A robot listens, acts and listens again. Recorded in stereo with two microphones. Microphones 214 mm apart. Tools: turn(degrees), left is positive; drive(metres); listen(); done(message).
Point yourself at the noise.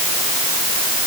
listen()
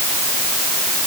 listen()
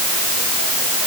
done("I can't make out anything to turn to.")